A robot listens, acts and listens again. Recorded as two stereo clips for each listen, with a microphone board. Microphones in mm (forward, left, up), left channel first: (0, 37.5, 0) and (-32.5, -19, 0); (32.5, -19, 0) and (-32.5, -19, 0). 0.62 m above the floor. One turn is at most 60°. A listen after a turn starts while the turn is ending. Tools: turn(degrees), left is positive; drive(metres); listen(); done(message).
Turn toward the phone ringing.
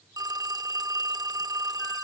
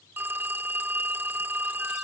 turn(degrees=-60)
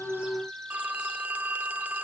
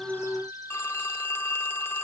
turn(degrees=-55)
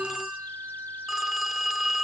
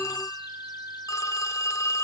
turn(degrees=-35)
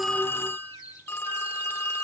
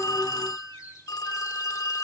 done("Found it: a phone ringing, straight ahead, under 1 m away.")